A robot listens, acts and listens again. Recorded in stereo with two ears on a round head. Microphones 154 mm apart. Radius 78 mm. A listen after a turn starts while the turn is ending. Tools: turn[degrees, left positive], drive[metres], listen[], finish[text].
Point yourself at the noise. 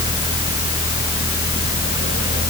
Action: listen[]
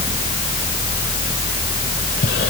Action: listen[]
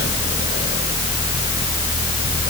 Action: finish[I can't make out anything.]